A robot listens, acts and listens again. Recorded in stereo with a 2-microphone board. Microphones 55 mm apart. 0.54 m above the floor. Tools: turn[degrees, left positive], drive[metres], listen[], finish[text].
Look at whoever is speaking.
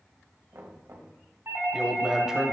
Action: turn[-30]
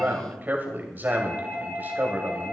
Thought: So it is at 140° right.
Action: turn[-140]
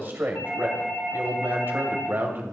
Thought: The man speaking is now 45° right.
Action: turn[-45]
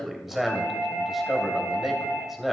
Action: finish[Facing the man speaking, 2 to 4 m away.]